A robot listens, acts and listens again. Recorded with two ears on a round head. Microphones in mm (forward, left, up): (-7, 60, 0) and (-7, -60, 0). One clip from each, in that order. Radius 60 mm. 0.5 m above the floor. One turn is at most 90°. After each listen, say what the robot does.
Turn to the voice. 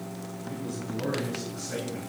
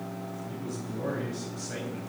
Turn 30° left.
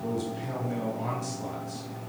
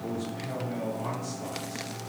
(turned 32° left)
Turn 90° left.
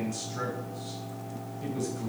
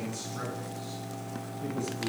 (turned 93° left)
Turn 55° left.
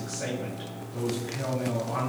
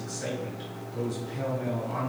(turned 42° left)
Turn 10° left.
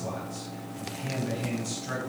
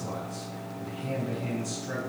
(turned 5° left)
Found it: a man speaking, straight ahead.